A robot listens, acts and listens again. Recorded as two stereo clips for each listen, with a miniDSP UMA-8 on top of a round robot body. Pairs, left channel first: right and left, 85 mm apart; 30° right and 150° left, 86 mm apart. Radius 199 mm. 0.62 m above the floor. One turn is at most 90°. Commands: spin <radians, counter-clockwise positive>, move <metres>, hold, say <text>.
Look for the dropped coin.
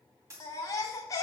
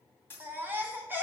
spin 0.61
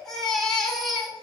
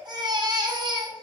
say I heard a dropped coin from this way, but can't make it out now.